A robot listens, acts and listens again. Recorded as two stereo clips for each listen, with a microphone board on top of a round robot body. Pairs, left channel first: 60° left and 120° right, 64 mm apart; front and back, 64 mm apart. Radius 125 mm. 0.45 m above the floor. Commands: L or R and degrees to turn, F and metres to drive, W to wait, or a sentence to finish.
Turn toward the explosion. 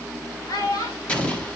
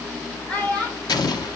R10
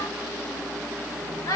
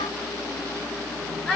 Facing where the explosion came from. I can't hear it now.